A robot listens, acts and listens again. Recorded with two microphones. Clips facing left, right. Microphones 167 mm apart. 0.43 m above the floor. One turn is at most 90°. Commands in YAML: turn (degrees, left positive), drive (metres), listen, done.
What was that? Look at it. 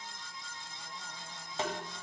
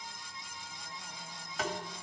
turn: 30
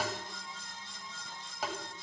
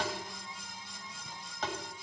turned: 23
turn: 10
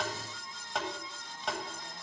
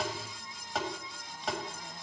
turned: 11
done: "Facing the tapping, 1 to 2 m away."